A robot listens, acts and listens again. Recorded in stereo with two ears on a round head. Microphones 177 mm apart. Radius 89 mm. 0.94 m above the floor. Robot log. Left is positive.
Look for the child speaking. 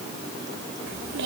note: The child speaking: about 65° right or 115° right.
cmd yaw -65
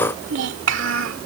note: So it is at 70° right.
cmd yaw -70
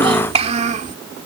note: The child speaking is now 40° right.
cmd yaw -40
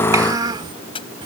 note: The child speaking is now 25° right.
cmd yaw -25
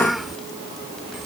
end: Facing the child speaking.